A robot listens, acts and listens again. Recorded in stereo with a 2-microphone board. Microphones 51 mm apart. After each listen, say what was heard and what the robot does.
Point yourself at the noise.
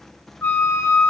The flute: about 40° left or 140° left. Turn 40° left.
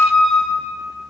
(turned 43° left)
Facing the flute, 1 to 2 m away.